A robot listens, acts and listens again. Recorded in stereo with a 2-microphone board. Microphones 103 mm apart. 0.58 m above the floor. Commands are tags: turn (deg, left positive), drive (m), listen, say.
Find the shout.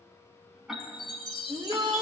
<turn deg="-45"/>
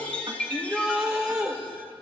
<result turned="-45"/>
<turn deg="-10"/>
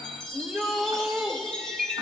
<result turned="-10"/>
<say>Facing the shout.</say>